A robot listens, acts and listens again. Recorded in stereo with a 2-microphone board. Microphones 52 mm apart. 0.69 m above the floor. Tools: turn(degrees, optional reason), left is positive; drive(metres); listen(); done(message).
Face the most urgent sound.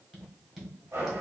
listen()
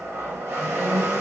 listen()
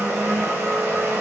done("I can't make out anything urgent, only a blender and tapping.")